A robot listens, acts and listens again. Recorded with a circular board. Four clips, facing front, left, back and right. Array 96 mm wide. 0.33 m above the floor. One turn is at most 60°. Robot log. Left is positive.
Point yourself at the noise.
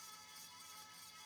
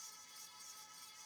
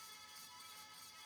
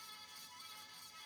cmd idle
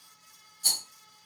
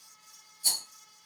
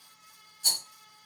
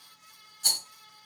note: The rattle: 85° right.
cmd yaw -60
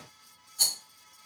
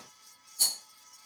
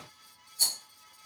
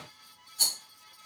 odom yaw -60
note: The rattle is now 30° right.
cmd yaw -30
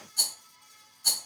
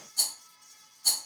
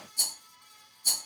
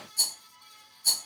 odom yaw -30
note: The rattle is now 30° left.
cmd yaw +30
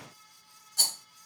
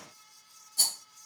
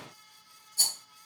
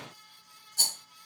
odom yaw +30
end: Found it: a rattle, straight ahead, 1 to 2 m away.